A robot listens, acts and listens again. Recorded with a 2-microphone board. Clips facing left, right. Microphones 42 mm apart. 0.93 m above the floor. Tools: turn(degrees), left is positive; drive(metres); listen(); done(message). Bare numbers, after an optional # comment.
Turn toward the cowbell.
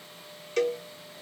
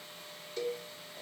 # The cowbell: about 75° left or 105° left.
turn(75)
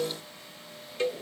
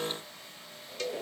# So it is at 25° left.
turn(25)
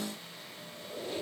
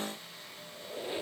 listen()
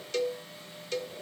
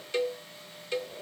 # The cowbell is now 25° right.
turn(-25)
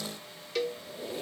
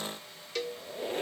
done("Facing the cowbell, under 1 m away.")